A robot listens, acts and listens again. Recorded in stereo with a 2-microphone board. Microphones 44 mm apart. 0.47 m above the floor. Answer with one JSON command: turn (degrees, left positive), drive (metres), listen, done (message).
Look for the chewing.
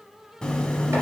{"turn": 15}
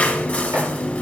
{"turn": 155}
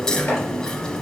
{"turn": 20}
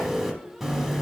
{"done": "Facing the chewing."}